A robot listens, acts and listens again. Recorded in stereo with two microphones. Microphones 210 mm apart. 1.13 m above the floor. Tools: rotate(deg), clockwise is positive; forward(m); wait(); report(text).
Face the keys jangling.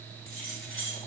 rotate(-90)
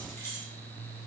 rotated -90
rotate(-15)
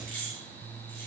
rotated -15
rotate(-10)
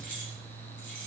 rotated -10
rotate(-10)
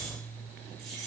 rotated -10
report("Found it: keys jangling, straight ahead.")